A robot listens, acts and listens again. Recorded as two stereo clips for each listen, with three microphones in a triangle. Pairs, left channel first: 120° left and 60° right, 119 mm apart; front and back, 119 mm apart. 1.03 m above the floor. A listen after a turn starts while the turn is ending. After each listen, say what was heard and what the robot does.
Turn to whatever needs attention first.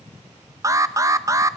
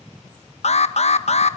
Facing the alarm, 1 to 2 m away.